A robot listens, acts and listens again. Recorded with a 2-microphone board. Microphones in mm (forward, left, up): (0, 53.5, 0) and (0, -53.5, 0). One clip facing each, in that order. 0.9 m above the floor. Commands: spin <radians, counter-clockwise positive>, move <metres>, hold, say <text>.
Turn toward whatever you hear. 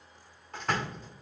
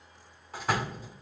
spin -0.52
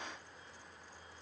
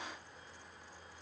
hold
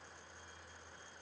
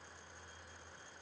say I heard a door slam, but can't make it out now. It was about 25° left or 145° right.